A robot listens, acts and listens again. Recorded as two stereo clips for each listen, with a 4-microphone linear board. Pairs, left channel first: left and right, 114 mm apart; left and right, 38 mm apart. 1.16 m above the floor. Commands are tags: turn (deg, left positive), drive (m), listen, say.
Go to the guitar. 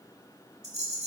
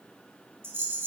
<listen/>
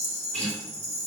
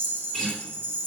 <turn deg="30"/>
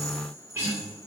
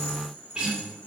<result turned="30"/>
<turn deg="-20"/>
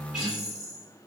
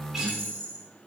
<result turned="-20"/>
<drive m="1.0"/>
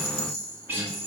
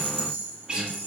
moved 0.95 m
<turn deg="-20"/>
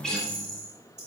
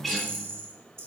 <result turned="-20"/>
<drive m="1.0"/>
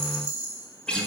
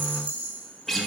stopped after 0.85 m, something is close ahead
<turn deg="10"/>
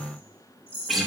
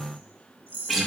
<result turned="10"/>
<say>Arrived at the guitar, straight ahead.</say>